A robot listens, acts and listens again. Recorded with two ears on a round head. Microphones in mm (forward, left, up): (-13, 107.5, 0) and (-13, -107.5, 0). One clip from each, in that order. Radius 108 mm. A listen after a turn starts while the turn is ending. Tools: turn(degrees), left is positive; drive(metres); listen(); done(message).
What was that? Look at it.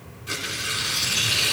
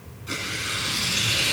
turn(degrees=30)
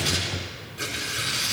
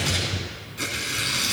turn(degrees=-25)
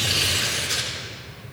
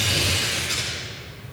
done("Found it: tearing paper, straight ahead.")